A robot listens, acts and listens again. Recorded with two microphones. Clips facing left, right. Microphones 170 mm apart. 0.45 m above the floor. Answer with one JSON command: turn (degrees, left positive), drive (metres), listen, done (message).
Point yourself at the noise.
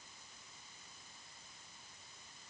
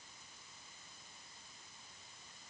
{"listen": true}
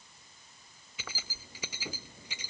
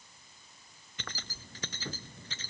{"turn": 30}
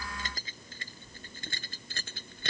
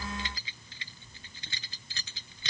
{"turn": 130}
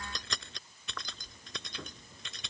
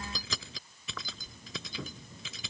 {"done": "Facing the keys jangling."}